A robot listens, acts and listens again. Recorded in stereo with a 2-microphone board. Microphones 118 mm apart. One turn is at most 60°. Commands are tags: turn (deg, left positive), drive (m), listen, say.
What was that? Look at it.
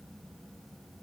<listen/>
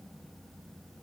<listen/>
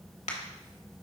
<turn deg="60"/>
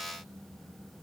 <listen/>
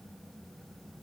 <say>I heard a crack, but can't make it out now. It was about 10° left or 50° left.</say>